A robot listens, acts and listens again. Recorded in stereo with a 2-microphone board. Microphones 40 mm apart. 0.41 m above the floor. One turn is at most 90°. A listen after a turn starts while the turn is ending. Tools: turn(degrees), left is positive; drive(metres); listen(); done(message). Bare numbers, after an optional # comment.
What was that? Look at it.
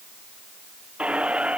# The squeak: about 25° right or 155° right.
turn(-25)
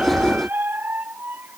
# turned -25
# So it is at 130° right.
turn(-90)
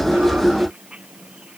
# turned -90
# The squeak is now 30° right.
turn(-30)
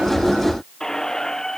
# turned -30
# The squeak is now 15° left.
turn(15)
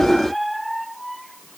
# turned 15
done("Found it: a squeak, straight ahead.")